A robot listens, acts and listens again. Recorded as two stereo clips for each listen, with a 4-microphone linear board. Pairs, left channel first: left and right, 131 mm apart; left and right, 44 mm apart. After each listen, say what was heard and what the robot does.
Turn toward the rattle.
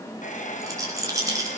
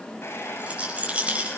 The rattle: about 25° right or 155° right. Turn 25° right.
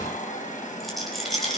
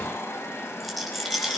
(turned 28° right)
Facing the rattle, over 4 m away.